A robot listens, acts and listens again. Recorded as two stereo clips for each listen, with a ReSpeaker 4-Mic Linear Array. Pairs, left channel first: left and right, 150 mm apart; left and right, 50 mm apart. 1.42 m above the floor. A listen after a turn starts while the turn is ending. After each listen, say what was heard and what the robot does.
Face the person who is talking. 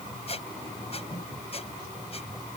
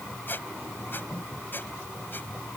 Keep listening.
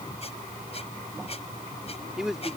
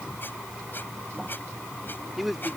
Turn 30° right.
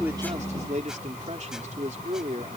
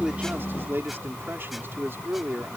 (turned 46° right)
So it is at 130° right. Turn 130° right.
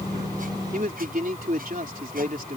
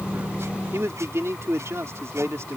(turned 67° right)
The man speaking is now 65° right. Turn 65° right.
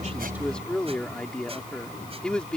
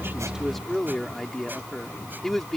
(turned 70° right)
Facing the man speaking.